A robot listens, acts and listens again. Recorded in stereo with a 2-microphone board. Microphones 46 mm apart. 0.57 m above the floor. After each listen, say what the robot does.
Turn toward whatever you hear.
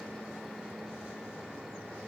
Keep listening.
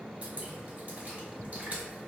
Turn 40° right.
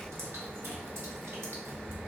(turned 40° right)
Turn 100° right.
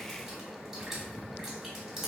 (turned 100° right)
Turn 10° right.
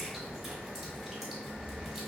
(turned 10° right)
Facing the dripping, 1 to 2 m away.